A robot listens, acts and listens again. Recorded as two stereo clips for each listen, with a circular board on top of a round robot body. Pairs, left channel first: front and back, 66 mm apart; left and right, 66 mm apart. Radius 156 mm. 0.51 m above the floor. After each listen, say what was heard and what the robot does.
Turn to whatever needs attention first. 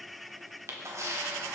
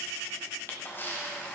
Keep listening.
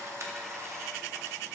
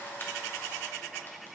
Keep listening.
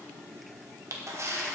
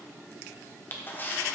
I can't make out anything urgent to turn to.